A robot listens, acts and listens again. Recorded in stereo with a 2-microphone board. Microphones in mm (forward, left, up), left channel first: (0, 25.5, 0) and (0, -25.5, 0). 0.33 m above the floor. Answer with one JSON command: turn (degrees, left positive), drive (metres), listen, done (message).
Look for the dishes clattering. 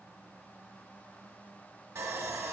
{"listen": true}
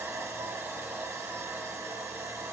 {"listen": true}
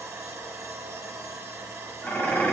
{"turn": 30}
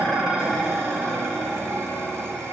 {"done": "Facing the dishes clattering."}